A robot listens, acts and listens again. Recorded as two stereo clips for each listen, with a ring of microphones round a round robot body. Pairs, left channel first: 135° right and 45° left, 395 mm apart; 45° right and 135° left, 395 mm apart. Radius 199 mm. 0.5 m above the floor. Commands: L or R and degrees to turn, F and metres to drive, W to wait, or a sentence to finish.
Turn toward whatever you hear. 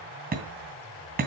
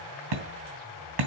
L110
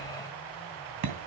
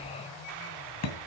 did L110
Facing the hammering, 2 to 4 m away.